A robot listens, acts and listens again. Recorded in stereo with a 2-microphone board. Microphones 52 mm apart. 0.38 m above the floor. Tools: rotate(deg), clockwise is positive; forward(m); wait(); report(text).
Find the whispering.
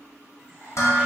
rotate(-25)
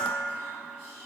wait()
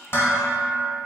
rotate(-130)
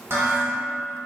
wait()
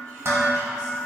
wait()
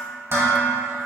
report("Facing where the whispering came from. I can't hear it now.")